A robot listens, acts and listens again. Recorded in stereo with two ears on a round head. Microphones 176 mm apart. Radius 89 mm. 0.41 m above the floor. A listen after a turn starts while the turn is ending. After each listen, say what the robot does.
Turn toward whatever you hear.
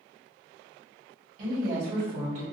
Turn 40° right.
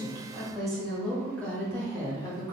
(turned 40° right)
Turn 20° left.
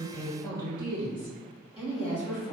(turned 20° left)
Turn 35° left.
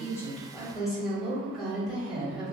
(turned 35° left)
Facing the woman speaking, 1 to 2 m away.